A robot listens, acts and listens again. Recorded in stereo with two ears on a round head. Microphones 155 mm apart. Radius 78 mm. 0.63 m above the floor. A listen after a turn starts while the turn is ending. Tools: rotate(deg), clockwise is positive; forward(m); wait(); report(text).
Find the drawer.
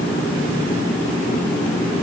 wait()
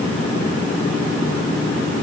wait()
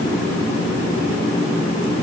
report("I can't make out a drawer to turn to.")